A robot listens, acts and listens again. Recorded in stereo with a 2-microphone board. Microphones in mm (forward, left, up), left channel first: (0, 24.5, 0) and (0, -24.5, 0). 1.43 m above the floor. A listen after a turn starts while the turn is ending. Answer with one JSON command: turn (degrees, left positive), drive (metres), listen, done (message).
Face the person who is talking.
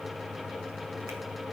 {"listen": true}
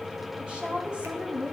{"turn": -20}
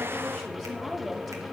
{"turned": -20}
{"done": "Facing the woman speaking, 2 to 4 m away."}